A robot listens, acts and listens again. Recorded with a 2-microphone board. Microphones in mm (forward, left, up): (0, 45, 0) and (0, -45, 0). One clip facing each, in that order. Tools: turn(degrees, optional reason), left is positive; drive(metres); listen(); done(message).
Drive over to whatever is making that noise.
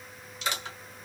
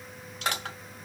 turn(degrees=-55, reason="The crushing: about 55° right or 125° right.")
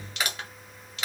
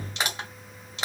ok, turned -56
turn(degrees=-40, reason="So it is at 40° right.")
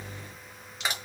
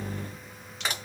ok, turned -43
drive(metres=1.0)
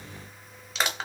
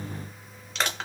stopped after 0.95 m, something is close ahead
turn(degrees=10, reason="The crushing is now 10° left.")
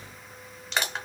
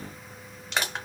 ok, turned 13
done("I am next to the crushing.")